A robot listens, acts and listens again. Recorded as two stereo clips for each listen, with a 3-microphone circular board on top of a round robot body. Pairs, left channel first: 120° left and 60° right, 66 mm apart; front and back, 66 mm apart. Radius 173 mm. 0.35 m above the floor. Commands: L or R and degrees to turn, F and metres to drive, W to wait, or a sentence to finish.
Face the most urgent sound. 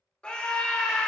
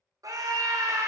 R170
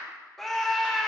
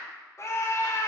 L35
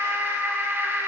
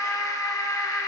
R10
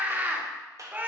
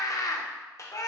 Facing the scream, 1 to 2 m away.